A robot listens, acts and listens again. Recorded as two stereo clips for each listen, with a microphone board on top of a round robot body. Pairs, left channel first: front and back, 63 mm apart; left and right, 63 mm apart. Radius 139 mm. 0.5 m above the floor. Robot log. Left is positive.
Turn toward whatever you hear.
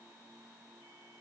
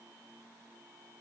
cmd idle
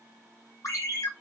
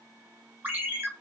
note: The ringtone: 30° right.
cmd yaw -30
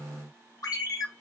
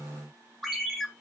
end: Facing the ringtone, 1 to 2 m away.